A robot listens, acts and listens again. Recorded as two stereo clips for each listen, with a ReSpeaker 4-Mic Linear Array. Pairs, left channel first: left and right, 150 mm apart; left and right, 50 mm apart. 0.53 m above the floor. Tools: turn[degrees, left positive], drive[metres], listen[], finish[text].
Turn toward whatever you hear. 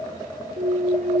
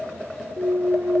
Thought: The clunk: about 60° right or 120° right.
Action: turn[-60]
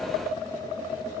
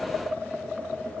Action: listen[]
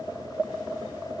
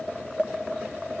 Action: finish[I heard a clunk, but can't make it out now. It was about straight ahead or 60° right.]